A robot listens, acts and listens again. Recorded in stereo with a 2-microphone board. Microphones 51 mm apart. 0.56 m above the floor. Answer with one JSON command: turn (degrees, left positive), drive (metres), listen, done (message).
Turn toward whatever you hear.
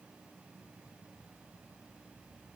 {"listen": true}
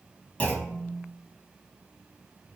{"turn": 25}
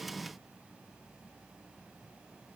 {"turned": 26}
{"listen": true}
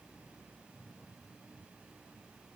{"done": "I heard a clunk, but can't make it out now. It was about straight ahead or 125° left."}